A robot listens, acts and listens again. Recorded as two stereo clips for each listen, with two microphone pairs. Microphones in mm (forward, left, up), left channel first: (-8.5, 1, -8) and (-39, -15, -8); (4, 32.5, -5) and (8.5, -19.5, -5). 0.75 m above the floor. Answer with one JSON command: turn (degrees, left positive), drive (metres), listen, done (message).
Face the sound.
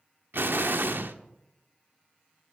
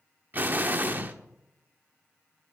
{"turn": -140}
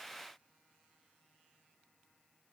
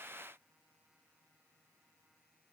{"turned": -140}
{"done": "Facing where the explosion came from. I can't hear it now."}